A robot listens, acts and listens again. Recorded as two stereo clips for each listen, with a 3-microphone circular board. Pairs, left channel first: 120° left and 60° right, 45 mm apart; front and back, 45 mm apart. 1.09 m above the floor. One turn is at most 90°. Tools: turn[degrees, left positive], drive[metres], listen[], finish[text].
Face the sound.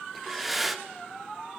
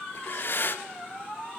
Thought: The breathing: 30° left.
Action: turn[30]
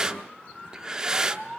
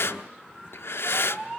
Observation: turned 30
Thought: The breathing is now 15° left.
Action: turn[15]
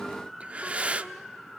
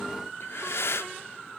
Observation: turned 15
Action: finish[Found it: breathing, straight ahead, 1 to 2 m away.]